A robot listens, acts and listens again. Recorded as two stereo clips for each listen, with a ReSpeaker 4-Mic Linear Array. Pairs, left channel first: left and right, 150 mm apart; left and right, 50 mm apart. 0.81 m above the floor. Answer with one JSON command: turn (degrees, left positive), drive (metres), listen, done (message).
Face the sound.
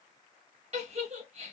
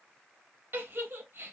{"turn": -50}
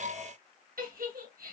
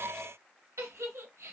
{"turn": -80}
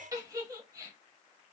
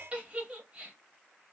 {"turn": -25}
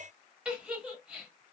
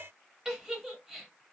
{"done": "Facing the giggle."}